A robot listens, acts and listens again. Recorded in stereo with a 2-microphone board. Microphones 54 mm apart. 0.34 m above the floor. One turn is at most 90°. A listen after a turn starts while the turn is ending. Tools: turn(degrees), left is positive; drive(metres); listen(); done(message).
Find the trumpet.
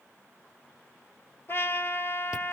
turn(degrees=45)
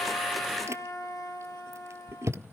turn(degrees=90)
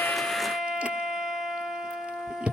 done("Facing the trumpet, 1 to 2 m away.")